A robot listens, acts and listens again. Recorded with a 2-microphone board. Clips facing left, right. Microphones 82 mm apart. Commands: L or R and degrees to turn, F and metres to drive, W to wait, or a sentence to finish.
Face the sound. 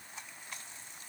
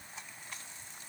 W
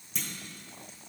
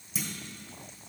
R30
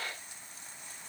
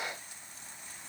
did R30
W
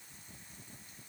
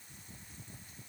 I heard a clunk, but can't make it out now. It was about 25° left or 145° right.